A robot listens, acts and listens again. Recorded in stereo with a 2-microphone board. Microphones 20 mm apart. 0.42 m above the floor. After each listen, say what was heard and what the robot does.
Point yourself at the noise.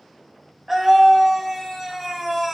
Turn 30° right.
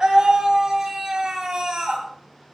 So it is at 145° right. Turn 145° right.
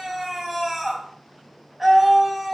The scream is now 20° right. Turn 20° right.
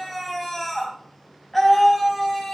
Found it: a scream, straight ahead.